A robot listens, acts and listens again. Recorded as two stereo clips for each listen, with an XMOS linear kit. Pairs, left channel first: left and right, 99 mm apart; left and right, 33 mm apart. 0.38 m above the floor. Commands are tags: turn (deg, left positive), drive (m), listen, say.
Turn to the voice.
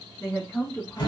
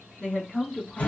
<turn deg="30"/>
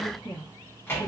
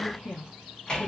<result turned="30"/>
<turn deg="115"/>
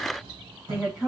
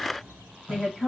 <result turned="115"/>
<say>Found it: a woman speaking, straight ahead.</say>